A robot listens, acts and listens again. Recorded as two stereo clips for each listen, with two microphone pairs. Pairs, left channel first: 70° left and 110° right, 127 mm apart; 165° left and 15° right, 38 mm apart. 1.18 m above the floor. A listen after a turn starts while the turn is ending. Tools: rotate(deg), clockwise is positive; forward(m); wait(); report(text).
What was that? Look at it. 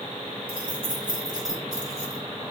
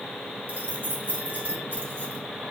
rotate(50)
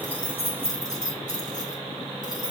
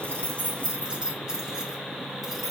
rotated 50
rotate(-75)
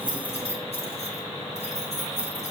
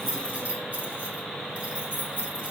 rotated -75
rotate(-45)
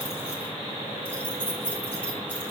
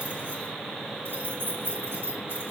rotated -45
report("Found it: keys jangling, straight ahead.")